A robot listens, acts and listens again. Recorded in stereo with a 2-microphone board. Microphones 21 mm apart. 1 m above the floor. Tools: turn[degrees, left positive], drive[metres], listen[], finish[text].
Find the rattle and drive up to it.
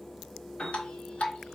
Action: listen[]
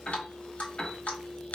Action: listen[]
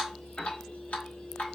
Action: finish[I can't make out a rattle to turn to.]